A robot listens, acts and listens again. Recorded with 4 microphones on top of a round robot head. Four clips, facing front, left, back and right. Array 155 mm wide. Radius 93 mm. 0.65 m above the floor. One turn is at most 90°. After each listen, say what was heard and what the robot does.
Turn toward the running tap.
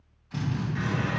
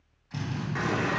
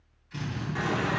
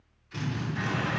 The running tap: 130° left. Turn 90° left.
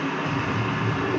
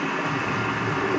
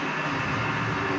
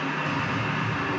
The running tap is now 60° left. Turn 60° left.
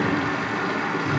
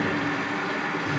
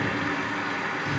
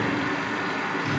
Facing the running tap, under 1 m away.